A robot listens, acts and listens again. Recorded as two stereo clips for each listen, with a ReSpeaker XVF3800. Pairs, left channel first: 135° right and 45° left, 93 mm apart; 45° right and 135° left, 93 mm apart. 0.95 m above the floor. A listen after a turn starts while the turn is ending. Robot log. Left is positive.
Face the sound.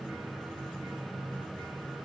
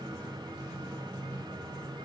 cmd idle
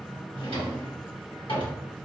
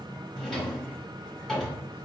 note: The drawer: 130° right.
cmd yaw -130
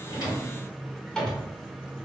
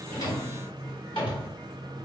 note: The drawer is now 50° right.
cmd yaw -50
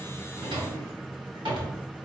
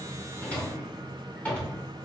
note: The drawer is now 25° left.
cmd yaw +25
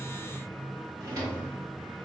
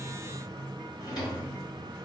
end: Facing the drawer, 1 to 2 m away.